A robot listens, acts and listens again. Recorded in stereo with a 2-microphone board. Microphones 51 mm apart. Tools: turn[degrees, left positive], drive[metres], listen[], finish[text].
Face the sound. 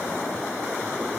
Action: listen[]
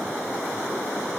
Action: listen[]
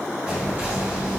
Thought: The whispering: about 30° right or 150° right.
Action: turn[-30]
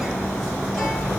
Action: finish[Found it: whispering, straight ahead.]